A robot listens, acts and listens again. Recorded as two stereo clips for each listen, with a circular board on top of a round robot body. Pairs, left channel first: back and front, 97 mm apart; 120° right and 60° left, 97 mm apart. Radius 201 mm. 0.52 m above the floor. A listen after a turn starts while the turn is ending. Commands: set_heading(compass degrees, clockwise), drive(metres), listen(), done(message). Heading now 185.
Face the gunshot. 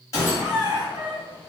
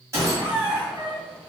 set_heading(65)
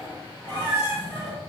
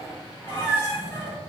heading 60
done("Facing where the gunshot came from. I can't hear it now.")